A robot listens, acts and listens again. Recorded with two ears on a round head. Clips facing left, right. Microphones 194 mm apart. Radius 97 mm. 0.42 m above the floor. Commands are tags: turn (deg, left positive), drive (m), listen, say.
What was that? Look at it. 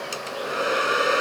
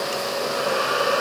<turn deg="30"/>
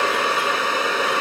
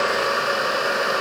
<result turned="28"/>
<turn deg="120"/>
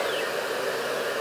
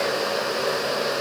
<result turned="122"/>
<listen/>
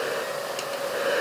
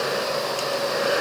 <say>Facing the hair dryer.</say>